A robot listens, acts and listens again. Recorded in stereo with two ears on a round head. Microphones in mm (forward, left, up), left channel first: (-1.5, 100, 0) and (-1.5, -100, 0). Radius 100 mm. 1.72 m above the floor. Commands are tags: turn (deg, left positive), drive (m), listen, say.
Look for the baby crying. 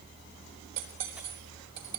<listen/>
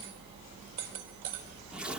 <listen/>
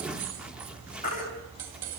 <turn deg="35"/>
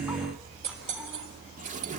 <listen/>
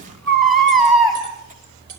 <say>Found it: a baby crying, straight ahead.</say>